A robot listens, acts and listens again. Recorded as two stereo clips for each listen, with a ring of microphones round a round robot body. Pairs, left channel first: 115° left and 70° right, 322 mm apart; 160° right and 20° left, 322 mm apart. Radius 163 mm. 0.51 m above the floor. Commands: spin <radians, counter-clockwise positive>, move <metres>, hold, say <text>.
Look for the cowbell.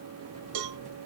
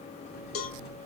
spin -1.83
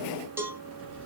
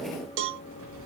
spin 0.26
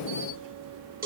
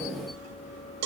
say Found it: a cowbell, straight ahead, under 1 m away.